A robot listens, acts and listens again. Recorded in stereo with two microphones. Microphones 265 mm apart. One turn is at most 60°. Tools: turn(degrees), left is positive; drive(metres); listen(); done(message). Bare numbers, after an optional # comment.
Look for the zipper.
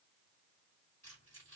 listen()
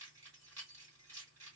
listen()
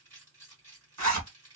# The zipper: about 70° right or 110° right.
turn(-60)
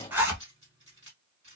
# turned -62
done("Facing the zipper.")